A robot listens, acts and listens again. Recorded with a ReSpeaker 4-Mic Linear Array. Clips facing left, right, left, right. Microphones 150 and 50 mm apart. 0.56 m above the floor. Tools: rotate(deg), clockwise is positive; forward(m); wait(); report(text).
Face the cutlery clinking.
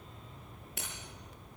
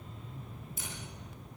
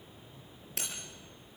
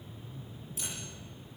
rotate(-65)
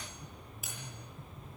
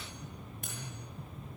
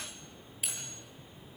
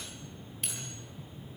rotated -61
report("Found it: cutlery clinking, straight ahead.")